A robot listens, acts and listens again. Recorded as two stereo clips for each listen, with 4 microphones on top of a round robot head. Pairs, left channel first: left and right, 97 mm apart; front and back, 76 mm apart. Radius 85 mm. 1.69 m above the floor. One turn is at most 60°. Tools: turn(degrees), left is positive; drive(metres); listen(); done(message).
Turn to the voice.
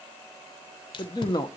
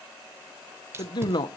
turn(degrees=30)
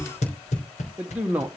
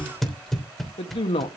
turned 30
turn(degrees=-10)
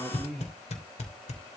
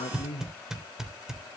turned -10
done("Facing the man speaking, 1 to 2 m away.")